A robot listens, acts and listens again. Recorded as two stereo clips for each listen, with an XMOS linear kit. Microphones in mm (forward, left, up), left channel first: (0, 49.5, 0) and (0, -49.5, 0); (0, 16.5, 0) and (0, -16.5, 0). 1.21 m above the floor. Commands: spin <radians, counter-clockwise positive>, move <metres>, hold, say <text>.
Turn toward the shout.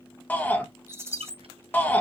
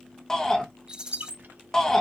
spin 0.35
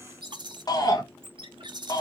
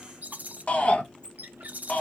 spin 2.44
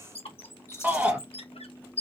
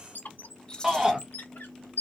spin -0.35
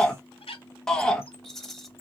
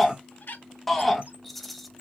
say Facing the shout.